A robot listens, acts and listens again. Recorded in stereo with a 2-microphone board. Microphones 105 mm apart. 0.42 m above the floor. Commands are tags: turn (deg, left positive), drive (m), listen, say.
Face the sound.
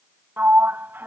<turn deg="-20"/>
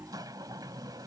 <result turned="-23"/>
<listen/>
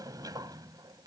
<turn deg="-140"/>
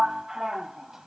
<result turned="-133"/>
<say>Facing the sliding door.</say>